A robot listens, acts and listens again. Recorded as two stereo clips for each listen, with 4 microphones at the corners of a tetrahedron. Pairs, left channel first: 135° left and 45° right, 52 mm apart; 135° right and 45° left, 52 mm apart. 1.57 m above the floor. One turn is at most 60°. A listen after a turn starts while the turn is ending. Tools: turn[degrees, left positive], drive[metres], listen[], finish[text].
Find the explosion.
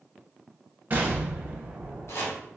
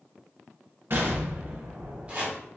Thought: The explosion: 10° left.
Action: turn[10]
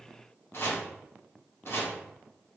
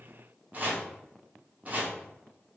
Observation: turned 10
Action: finish[Facing where the explosion came from. I can't hear it now.]